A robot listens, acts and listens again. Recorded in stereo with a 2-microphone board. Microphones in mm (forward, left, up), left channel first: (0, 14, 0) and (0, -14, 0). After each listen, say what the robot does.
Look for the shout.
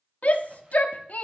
Turn 60° left.
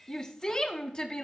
Turn 35° left.
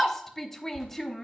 Turn 20° left.
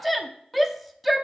Found it: a shout, straight ahead.